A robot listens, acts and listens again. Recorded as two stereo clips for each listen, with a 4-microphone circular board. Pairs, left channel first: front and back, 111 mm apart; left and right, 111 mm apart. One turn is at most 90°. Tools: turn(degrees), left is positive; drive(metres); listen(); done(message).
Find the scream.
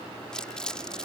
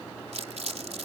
listen()
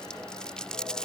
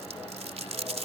listen()
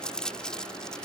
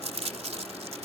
done("I can't make out a scream, only crumpling.")